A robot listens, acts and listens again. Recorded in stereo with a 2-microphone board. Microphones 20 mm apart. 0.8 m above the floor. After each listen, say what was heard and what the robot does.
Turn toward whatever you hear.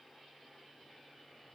Keep listening.
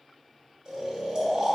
The snoring: about 35° right or 145° right. Turn 35° right.
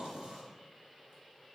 So it is at 110° right. Turn 110° right.
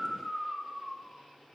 The snoring is now 20° right. Turn 20° right.
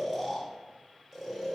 Found it: snoring, straight ahead.